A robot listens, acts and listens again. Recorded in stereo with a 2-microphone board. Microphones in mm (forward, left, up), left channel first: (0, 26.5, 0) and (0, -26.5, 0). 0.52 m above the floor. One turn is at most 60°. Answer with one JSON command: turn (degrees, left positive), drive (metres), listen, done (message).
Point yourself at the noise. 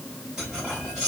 {"turn": -30}
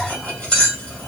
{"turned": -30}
{"turn": 20}
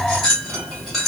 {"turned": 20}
{"done": "Facing the cutlery clinking."}